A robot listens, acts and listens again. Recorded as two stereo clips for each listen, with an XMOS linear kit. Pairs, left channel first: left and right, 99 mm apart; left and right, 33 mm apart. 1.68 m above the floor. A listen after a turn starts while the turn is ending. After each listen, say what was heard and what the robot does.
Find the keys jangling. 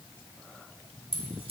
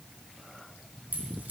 The keys jangling: about 70° right or 110° right. Turn 70° right.
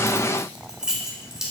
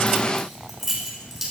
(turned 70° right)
Facing the keys jangling.